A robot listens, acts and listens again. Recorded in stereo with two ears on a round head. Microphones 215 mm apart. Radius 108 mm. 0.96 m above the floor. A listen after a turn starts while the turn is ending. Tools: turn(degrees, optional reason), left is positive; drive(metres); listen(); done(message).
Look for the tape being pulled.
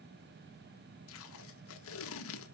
turn(degrees=65, reason="The tape being pulled: about 65° left or 115° left.")
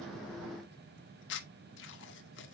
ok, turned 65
turn(degrees=55, reason="So it is at 55° left.")
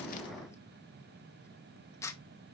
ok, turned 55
turn(degrees=15, reason="The tape being pulled is now 15° left.")
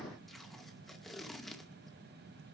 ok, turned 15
done("Found it: tape being pulled, straight ahead, 1 to 2 m away.")